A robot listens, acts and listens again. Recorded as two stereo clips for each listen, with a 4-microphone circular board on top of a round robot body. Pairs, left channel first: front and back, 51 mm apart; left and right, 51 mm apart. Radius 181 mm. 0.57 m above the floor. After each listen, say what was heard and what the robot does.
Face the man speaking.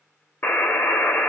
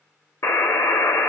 Keep listening.
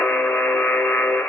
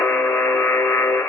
Keep listening.
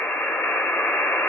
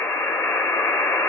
I can't make out a man speaking to turn to.